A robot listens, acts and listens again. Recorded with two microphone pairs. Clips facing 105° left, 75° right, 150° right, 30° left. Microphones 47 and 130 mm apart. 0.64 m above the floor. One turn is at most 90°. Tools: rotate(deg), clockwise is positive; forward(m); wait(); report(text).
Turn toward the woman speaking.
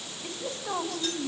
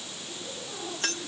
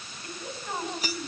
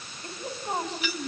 rotate(-85)
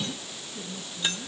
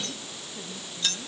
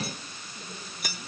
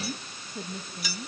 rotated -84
rotate(10)
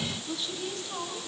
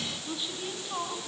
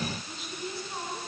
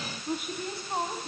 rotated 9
report("Facing the woman speaking.")